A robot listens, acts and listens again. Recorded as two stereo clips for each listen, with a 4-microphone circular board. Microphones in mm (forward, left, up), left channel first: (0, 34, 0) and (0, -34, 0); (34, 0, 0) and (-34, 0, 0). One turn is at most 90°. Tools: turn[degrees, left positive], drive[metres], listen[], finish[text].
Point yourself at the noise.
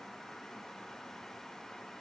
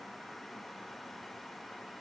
Action: listen[]
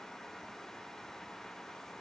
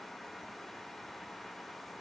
Action: listen[]
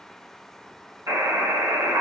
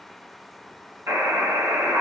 Thought: The buzzer: 130° right.
Action: turn[-90]
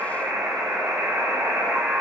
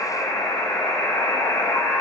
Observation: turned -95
Thought: The buzzer is now 35° right.
Action: turn[-35]
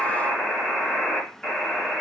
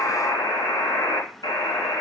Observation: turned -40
Action: finish[Found it: a buzzer, straight ahead.]